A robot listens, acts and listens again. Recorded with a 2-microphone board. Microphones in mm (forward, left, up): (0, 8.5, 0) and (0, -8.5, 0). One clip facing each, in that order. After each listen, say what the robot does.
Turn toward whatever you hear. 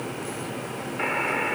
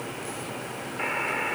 Turn 30° left.
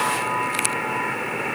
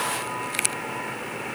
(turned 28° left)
Turn 145° left.
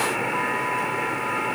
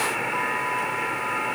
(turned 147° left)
Facing the buzzer.